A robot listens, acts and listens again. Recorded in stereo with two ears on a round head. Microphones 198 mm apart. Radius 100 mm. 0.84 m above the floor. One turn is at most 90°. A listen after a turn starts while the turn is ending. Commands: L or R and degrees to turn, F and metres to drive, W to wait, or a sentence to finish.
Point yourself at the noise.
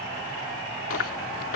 L70
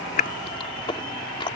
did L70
L25
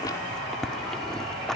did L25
Found it: chewing, straight ahead.